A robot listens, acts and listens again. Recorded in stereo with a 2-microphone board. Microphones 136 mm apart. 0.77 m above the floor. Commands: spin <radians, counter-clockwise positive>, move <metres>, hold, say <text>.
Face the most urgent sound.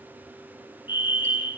spin -0.52
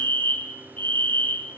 spin 0.26
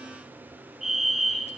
say Facing the fire alarm.